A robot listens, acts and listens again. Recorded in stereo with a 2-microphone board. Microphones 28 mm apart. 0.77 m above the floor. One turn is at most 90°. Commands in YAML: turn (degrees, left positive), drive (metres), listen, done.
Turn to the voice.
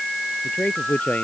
turn: 65
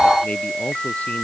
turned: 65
listen: true
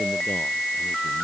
listen: true
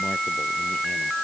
done: "I heard a man speaking, but can't make it out now. It was about straight ahead or 50° left."